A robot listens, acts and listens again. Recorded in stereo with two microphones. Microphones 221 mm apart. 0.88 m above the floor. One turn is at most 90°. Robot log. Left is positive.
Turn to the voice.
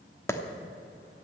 cmd idle
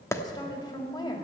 note: The woman speaking: about 20° left or 160° left.
cmd yaw +20
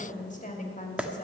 note: So it is at 140° left.
cmd yaw +90
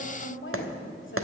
note: The woman speaking is now 75° left.
cmd yaw +75
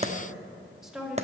end: Found it: a woman speaking, straight ahead.